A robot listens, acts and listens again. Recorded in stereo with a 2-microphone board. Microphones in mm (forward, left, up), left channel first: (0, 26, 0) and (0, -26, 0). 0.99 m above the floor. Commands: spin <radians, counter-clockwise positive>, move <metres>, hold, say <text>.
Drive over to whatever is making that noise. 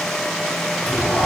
spin 0.44
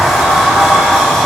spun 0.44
move 1.0
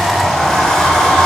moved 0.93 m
spin 0.17
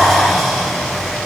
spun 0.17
move 1.0
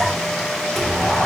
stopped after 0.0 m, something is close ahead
say I am next to the sliding door.